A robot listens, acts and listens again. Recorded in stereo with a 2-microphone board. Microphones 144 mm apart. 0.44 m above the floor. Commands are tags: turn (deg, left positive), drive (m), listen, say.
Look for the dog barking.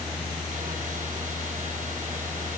<listen/>
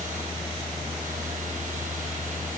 <listen/>
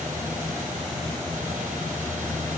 <say>I can't make out a dog barking to turn to.</say>